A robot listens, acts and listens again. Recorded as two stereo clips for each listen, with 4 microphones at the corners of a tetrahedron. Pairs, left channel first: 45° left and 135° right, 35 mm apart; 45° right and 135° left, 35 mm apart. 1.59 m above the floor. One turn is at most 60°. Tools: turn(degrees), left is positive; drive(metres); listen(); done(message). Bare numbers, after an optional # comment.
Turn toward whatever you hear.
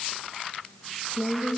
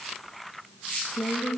done("Found it: a woman speaking, straight ahead.")